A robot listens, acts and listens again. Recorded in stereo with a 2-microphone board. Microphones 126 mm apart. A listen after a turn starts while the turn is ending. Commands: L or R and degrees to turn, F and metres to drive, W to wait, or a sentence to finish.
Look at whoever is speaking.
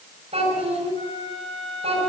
R50
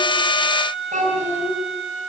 R75
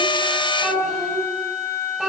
Facing the child speaking.